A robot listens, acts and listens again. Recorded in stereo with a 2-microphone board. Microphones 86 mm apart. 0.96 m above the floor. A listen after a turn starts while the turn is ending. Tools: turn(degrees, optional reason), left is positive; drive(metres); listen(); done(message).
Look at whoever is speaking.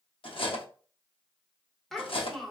turn(degrees=30)
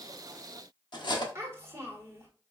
turn(degrees=-30, reason="So it is at 30° right.")
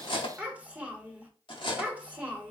turn(degrees=-15, reason="The child speaking is now 15° right.")
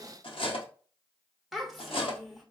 done("Facing the child speaking, 1 to 2 m away.")